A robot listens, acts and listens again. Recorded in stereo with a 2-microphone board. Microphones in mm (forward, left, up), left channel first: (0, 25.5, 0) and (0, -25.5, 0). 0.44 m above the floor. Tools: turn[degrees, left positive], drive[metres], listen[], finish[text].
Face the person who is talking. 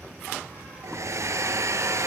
Action: listen[]
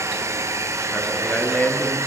Thought: The man speaking: about 30° left or 150° left.
Action: turn[30]
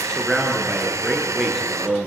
Action: finish[Facing the man speaking.]